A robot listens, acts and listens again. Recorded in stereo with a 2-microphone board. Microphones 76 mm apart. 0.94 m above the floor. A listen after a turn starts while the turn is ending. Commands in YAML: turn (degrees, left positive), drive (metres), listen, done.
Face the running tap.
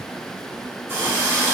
turn: -25
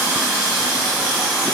done: "Facing the running tap, 1 to 2 m away."